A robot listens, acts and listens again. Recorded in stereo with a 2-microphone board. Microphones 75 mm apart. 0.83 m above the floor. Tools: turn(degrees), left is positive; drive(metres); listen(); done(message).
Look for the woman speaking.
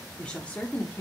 turn(degrees=25)
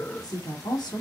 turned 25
turn(degrees=110)
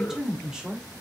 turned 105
turn(degrees=-10)
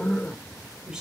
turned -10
turn(degrees=-10)
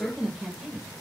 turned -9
done("Found it: a woman speaking, straight ahead, 2 to 4 m away.")